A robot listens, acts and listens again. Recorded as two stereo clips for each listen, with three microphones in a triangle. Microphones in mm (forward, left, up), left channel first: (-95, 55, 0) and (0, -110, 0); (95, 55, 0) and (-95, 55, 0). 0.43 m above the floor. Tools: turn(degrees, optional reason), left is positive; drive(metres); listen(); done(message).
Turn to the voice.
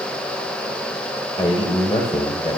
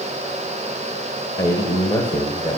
turn(degrees=65, reason="The man speaking: 65° left.")
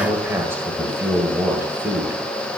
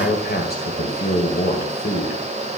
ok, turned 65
turn(degrees=15, reason="The man speaking is now 15° left.")
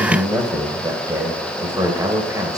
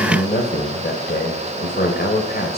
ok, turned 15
done("Facing the man speaking.")